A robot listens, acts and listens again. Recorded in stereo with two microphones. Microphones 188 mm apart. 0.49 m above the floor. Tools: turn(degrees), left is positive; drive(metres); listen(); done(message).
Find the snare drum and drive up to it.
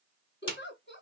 turn(degrees=25)
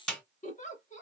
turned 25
drive(metres=1.0)
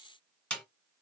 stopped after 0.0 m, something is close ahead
done("Blocked. The snare drum is further on, straight ahead.")